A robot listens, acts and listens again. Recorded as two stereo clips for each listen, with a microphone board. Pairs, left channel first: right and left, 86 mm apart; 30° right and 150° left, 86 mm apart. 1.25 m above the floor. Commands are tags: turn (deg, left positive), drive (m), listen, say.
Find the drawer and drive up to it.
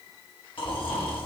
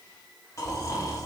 <listen/>
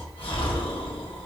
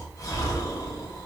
<listen/>
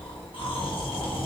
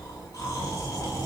<say>I can't make out a drawer to turn to.</say>